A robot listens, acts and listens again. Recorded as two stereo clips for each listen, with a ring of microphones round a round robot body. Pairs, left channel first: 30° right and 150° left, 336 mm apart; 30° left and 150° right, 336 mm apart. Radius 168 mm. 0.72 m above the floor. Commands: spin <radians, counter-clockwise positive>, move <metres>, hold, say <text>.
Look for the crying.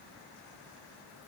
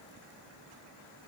hold
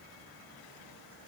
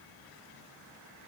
hold
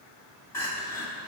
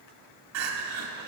spin -1.92
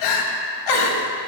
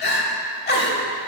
spin -0.52
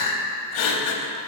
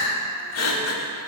spin -0.17
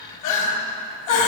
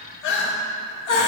say Facing the crying, under 1 m away.